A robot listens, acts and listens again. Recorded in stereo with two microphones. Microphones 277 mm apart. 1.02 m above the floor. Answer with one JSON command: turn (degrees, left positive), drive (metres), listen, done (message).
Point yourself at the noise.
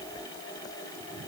{"listen": true}
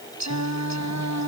{"turn": -90}
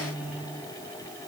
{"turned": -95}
{"done": "Facing the singing."}